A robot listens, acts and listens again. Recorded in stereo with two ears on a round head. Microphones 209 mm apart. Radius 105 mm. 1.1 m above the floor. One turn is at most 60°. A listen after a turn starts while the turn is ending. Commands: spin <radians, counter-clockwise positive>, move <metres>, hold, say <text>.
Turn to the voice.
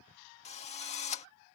hold
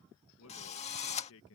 spin 1.05
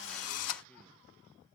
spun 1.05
hold
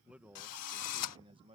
spin -0.44
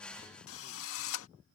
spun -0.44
hold
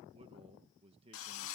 spin -0.44
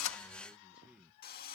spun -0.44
say Found it: a man speaking, straight ahead.